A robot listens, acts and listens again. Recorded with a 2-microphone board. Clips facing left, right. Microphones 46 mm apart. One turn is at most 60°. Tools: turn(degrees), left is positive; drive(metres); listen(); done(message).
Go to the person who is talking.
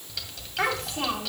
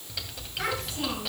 turn(degrees=60)
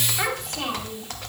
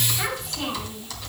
turn(degrees=50)
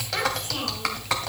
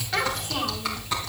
drive(metres=1.0)
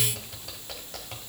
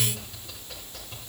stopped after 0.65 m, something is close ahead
listen()
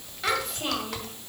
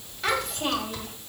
done("Something is in my way. I am facing the child speaking but have not reached it.")